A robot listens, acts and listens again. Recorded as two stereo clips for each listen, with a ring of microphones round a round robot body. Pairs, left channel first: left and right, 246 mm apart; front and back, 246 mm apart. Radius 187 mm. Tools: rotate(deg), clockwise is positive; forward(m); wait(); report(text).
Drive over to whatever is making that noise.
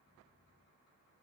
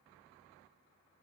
wait()
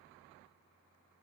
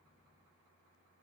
wait()
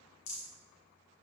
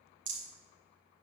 rotate(-135)
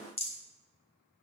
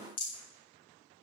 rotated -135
rotate(-25)
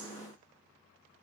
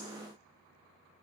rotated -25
wait()
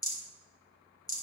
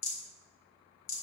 rotate(-15)
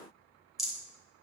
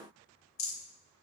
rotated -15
forward(1.0)
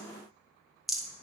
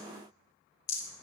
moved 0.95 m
forward(1.0)
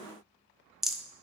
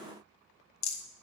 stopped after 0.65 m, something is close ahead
report("Arrived at the rattle, straight ahead.")